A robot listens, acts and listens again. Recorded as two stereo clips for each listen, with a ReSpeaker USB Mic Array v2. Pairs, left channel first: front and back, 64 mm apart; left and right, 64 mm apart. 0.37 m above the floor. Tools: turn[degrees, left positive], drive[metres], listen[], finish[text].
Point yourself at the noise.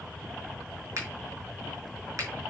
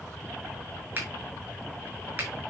Thought: The finger snap: 150° right.
Action: turn[-150]
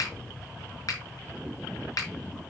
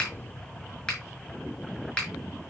Thought: The finger snap is now 15° left.
Action: turn[15]
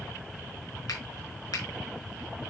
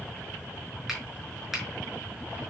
Action: finish[Facing the finger snap, over 4 m away.]